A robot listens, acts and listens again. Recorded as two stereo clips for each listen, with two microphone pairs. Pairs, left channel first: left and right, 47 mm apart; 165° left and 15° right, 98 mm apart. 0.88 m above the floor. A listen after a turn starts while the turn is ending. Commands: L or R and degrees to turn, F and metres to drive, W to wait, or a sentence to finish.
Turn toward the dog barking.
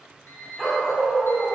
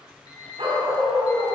L10
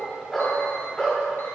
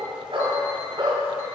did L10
L20
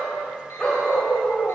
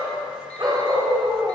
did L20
L35
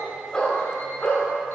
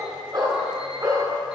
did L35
L35
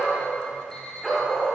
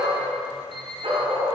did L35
Facing the dog barking, 1 to 2 m away.